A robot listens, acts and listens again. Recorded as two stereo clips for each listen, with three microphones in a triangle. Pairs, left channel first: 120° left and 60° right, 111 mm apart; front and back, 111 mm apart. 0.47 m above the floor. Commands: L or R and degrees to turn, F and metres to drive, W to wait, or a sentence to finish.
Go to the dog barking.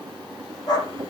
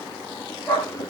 L75
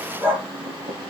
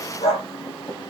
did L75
L15
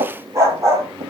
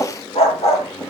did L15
F1.0
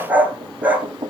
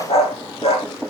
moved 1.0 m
L15
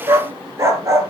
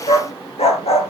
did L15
F1.0
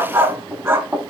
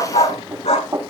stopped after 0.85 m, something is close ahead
Arrived at the dog barking, straight ahead.